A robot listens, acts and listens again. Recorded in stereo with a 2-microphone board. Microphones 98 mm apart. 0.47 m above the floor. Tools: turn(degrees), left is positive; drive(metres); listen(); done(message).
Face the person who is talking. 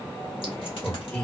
turn(degrees=30)
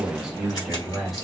turn(degrees=30)
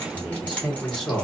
turn(degrees=30)
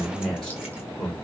turn(degrees=15)
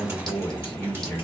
turn(degrees=20)
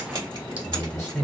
turn(degrees=30)
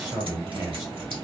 turn(degrees=-25)
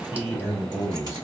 done("Found it: a man speaking, straight ahead, 1 to 2 m away.")